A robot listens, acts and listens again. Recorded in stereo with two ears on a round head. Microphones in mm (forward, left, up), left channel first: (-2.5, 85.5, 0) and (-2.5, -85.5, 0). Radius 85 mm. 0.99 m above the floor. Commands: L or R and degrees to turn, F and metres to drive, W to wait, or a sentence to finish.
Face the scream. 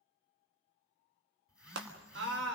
R70
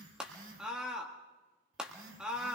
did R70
Found it: a scream, straight ahead, 1 to 2 m away.